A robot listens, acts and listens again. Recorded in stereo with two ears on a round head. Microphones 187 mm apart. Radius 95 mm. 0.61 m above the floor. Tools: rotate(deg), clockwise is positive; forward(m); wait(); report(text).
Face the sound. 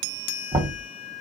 rotate(20)
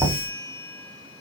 report("Facing the knocking, 1 to 2 m away.")